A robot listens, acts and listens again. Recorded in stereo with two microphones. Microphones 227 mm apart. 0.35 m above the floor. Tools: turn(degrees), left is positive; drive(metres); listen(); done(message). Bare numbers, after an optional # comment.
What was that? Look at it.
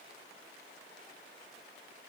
listen()
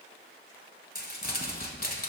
# The crumpling: about 45° left or 135° left.
turn(45)
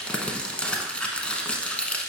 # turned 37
done("Facing the crumpling.")